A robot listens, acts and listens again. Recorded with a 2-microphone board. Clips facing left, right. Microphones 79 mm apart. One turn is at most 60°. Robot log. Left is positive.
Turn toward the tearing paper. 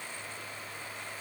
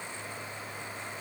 cmd idle
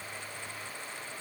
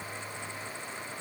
cmd idle
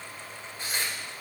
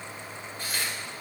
note: The tearing paper: about 25° left or 155° left.
cmd yaw +25
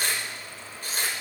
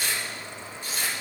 note: So it is at 130° left.
cmd yaw +60
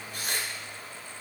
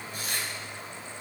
note: The tearing paper is now 70° left.
cmd yaw +60
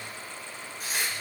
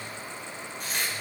end: Found it: tearing paper, straight ahead.